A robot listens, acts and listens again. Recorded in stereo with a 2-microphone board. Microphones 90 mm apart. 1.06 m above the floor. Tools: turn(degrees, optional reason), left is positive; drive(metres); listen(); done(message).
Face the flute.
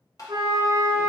turn(degrees=-55, reason="The flute: about 55° right or 125° right.")
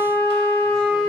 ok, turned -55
turn(degrees=-70, reason="So it is at 70° right.")
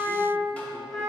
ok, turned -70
done("Found it: a flute, straight ahead.")